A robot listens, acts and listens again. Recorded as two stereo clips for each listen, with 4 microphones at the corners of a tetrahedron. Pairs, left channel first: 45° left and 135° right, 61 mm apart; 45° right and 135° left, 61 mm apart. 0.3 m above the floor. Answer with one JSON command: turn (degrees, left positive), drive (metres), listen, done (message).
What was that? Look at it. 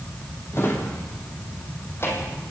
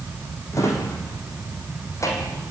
{"done": "Facing the drawer."}